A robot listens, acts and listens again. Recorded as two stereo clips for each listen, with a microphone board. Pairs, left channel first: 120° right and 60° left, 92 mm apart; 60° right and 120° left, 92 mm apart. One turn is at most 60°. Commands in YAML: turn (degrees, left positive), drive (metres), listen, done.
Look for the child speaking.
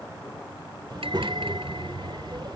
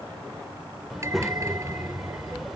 turn: 35
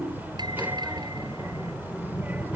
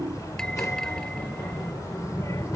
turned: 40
done: "Facing the child speaking."